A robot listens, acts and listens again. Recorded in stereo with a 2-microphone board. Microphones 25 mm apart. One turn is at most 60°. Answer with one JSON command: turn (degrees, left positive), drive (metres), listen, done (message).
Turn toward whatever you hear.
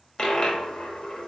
{"turn": 35}
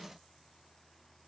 {"listen": true}
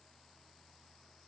{"done": "I heard a dropped coin, but can't make it out now. It was about straight ahead or 110° left."}